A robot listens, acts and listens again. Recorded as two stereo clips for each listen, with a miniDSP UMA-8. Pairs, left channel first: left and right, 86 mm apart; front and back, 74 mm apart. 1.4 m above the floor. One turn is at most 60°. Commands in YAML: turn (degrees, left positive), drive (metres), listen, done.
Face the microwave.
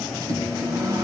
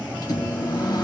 turn: -35
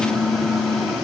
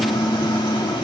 done: "Found it: a microwave, straight ahead."